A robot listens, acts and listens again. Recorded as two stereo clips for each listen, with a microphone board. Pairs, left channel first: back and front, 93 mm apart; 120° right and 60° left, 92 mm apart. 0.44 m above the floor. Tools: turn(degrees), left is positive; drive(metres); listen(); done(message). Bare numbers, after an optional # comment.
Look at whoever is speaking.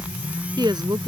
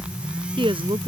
# The woman speaking: 40° left.
turn(40)
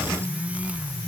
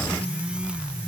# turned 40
listen()
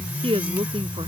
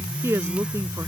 done("Facing the woman speaking.")